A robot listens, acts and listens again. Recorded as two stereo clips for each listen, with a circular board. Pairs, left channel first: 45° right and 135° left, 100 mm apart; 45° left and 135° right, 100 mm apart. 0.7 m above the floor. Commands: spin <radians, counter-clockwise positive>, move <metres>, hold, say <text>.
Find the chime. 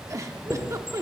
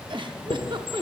spin 0.35
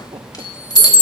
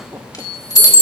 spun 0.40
say Found it: a chime, straight ahead.